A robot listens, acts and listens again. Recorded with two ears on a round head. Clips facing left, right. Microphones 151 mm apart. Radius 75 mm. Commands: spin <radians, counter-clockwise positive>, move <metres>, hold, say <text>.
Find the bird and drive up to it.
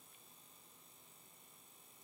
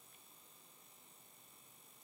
hold
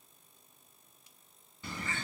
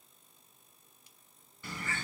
spin 0.35
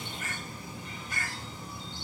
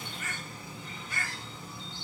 spin 2.44
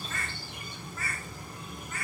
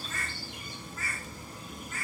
spin 0.87
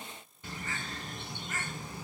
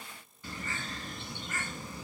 spin 0.35
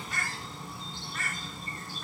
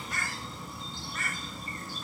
move 1.0
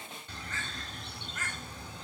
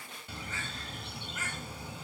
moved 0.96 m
spin -0.17
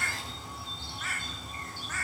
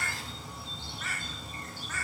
move 1.0
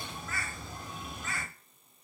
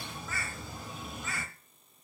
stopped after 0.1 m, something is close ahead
say Arrived at the bird, straight ahead.